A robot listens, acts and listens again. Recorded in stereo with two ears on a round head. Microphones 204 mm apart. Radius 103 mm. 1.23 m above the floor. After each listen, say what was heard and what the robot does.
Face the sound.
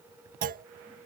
The clunk: about 40° right or 140° right. Turn 40° right.
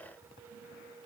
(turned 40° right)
Keep listening.
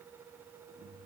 I heard a clunk, but can't make it out now. It was about straight ahead or 100° right.